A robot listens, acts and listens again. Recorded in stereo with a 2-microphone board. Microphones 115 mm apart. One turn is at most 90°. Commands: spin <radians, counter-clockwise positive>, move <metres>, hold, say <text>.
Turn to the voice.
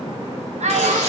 spin -1.31
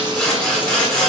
hold
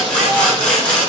hold
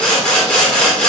say I heard a child speaking, but can't make it out now. It was about straight ahead or 30° right.